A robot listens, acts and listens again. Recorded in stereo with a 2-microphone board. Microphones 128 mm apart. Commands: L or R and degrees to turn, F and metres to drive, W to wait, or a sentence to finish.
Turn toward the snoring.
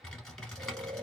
R40
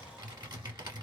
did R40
W
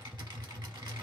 W
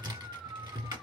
R10
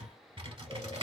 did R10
W
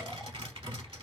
W
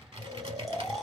Found it: snoring, straight ahead.